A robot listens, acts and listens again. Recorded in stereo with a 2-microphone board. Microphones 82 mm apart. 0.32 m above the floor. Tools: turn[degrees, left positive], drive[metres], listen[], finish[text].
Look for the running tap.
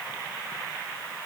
Action: listen[]
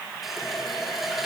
Action: turn[30]
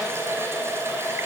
Thought: So it is at 35° right.
Action: turn[-35]
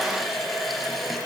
Action: finish[Facing the running tap.]